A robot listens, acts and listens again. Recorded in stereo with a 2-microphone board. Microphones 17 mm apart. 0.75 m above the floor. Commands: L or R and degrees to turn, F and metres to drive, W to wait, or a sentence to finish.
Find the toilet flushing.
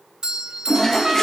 L25
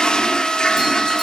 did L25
L130
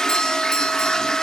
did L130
L40
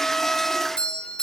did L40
W
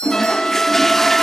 L20
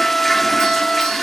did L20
L10
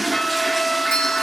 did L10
Found it: a toilet flushing, straight ahead, under 1 m away.